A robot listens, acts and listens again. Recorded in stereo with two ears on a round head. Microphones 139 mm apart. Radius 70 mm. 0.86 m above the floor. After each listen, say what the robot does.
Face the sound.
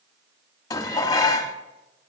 Turn 25° left.
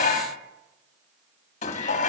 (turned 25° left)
Turn 130° left.
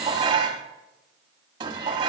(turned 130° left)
Turn 25° right.
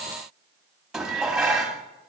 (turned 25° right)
Facing the dishes clattering, 1 to 2 m away.